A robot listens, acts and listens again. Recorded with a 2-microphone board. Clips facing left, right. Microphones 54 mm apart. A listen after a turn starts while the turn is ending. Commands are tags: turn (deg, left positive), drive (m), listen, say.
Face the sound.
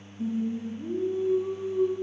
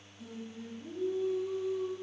<turn deg="40"/>
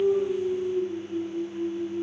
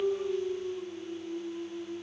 <say>Facing the singing.</say>